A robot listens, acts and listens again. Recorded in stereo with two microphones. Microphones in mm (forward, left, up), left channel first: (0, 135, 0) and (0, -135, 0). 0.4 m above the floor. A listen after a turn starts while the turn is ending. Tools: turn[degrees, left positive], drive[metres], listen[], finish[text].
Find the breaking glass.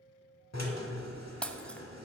Action: turn[30]
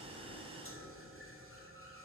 Action: listen[]
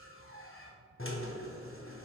Action: finish[I heard breaking glass, but can't make it out now. It was about 25° right or 145° left.]